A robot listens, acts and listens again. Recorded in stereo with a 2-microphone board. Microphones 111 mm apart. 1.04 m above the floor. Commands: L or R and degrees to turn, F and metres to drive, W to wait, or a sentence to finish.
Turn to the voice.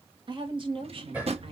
R55
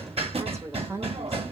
R30
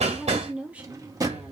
R15
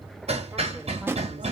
W
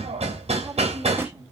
R20
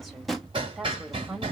Facing the woman speaking.